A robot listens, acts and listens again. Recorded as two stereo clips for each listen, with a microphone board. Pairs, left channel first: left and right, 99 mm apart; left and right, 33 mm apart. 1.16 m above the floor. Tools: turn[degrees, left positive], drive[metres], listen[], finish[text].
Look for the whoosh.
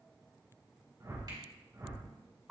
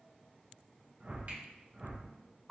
Thought: The whoosh: about 30° right or 150° right.
Action: turn[-30]
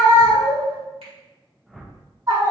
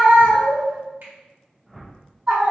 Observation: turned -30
Action: finish[Facing the whoosh.]